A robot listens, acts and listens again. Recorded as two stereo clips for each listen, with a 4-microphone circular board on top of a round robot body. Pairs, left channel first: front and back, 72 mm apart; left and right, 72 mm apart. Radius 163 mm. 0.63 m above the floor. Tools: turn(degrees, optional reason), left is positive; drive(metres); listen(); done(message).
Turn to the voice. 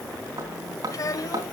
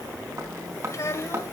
turn(degrees=40, reason="The child speaking: 40° left.")
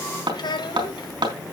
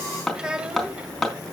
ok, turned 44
turn(degrees=-10, reason="The child speaking is now 10° right.")
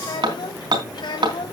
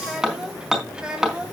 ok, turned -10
turn(degrees=-15, reason="The child speaking is now 15° right.")
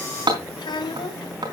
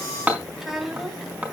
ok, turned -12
done("Found it: a child speaking, straight ahead, over 4 m away.")